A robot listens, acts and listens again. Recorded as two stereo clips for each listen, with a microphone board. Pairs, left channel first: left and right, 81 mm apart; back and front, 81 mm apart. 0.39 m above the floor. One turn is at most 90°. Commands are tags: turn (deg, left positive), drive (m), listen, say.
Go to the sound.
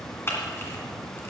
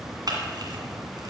<turn deg="30"/>
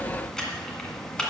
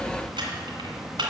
<turn deg="10"/>
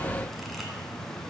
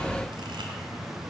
<listen/>
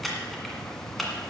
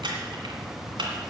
<drive m="1.0"/>
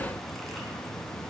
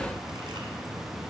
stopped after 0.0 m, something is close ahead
<listen/>
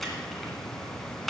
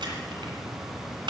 <say>Blocked. The camera shutter is further on, straight ahead.</say>